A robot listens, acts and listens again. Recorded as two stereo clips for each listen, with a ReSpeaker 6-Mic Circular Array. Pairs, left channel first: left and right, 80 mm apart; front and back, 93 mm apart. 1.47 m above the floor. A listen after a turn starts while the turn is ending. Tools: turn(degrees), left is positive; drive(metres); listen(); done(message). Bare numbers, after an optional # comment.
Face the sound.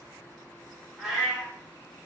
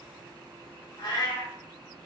# The cat meowing: 10° right.
turn(-10)
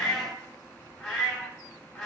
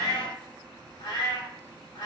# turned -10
done("Found it: a cat meowing, straight ahead, 1 to 2 m away.")